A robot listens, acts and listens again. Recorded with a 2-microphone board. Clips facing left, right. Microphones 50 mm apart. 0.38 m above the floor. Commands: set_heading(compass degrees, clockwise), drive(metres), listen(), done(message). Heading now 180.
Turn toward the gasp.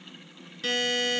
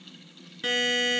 listen()
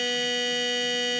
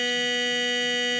listen()
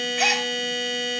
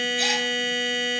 set_heading(135)
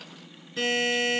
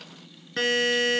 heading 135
listen()
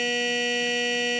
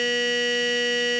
done("I heard a gasp, but can't make it out now. It was about straight ahead or 90° left.")